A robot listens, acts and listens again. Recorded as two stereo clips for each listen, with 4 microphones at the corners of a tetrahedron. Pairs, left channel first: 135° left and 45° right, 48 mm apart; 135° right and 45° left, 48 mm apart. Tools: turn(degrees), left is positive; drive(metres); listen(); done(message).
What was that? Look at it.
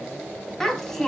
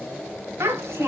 turn(degrees=55)
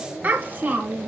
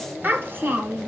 done("Facing the child speaking.")